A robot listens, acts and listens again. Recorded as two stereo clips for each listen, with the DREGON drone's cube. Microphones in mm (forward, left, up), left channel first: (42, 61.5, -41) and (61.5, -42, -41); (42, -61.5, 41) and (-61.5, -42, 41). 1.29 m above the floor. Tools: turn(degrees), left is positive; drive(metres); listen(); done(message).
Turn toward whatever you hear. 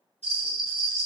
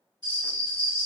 turn(degrees=120)
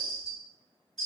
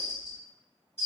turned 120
turn(degrees=10)
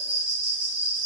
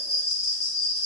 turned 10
done("Found it: a bell, straight ahead.")